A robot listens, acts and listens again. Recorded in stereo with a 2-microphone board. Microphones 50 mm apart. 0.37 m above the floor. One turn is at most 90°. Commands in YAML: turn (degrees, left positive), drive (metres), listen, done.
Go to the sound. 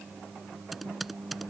turn: 30
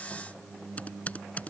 turn: 90
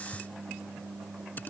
turn: 40
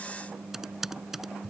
turn: -10
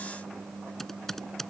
drive: 1.0
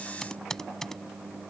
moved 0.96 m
turn: 10
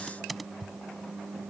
drive: 1.0
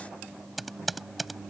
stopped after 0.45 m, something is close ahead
done: "I am next to the typing on a keyboard."